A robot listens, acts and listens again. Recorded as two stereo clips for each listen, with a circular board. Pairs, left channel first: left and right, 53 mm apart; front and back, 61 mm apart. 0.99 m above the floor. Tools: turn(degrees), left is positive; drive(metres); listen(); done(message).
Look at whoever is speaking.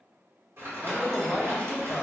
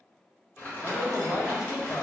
turn(degrees=15)
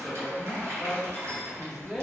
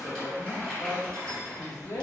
done("Found it: a man speaking, straight ahead, under 1 m away.")